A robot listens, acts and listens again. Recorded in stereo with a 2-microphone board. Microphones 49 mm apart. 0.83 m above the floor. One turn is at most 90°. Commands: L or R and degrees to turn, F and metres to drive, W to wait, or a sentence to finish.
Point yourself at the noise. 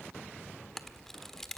L30
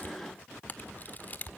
L90
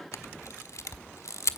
L90
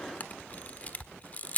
L30
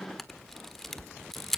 Found it: a camera shutter, straight ahead.